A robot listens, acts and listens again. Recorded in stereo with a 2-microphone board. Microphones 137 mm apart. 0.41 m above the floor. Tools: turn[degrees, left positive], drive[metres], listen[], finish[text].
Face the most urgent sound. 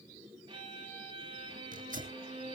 Action: listen[]
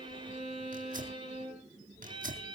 Action: listen[]
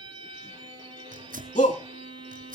Thought: The shout: about 70° left or 110° left.
Action: turn[70]
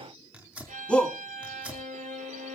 Thought: So it is at 10° left.
Action: turn[10]
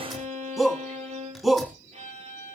Action: finish[Found it: a shout, straight ahead, 2 to 4 m away.]